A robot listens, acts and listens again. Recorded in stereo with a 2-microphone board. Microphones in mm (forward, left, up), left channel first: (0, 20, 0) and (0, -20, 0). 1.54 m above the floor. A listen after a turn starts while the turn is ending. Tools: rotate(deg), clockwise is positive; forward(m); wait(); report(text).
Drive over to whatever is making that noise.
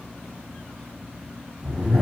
rotate(35)
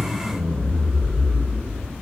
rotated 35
forward(1.0)
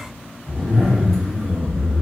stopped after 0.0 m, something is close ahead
report("Something is in my way. I am facing the zipper but have not reached it.")